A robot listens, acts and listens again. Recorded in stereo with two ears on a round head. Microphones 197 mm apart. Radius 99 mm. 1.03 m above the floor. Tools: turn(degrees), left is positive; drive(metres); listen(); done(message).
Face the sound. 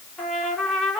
turn(degrees=30)
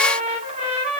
turn(degrees=-30)
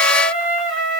done("Facing the trumpet, 2 to 4 m away.")